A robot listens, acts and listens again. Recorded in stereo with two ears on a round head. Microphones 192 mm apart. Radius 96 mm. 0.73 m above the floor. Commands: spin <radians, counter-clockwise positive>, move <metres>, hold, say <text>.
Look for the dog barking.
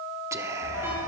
spin 1.57
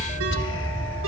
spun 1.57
spin 0.17
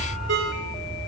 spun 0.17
say Facing the dog barking, over 4 m away.